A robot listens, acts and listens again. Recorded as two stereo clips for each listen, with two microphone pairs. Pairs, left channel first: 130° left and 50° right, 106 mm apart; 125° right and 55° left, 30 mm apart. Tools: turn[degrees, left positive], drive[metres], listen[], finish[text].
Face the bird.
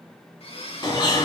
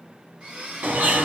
Thought: The bird: 80° left.
Action: turn[80]
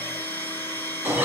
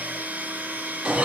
Thought: The bird is now 20° left.
Action: turn[20]
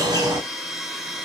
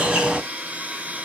Action: finish[Found it: a bird, straight ahead, 1 to 2 m away.]